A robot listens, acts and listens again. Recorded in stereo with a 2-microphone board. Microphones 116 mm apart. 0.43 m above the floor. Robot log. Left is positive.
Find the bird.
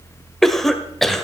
cmd idle
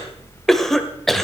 cmd idle
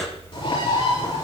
note: The bird: about 45° left or 135° left.
cmd yaw +45
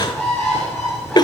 end: Found it: a bird, straight ahead, over 4 m away.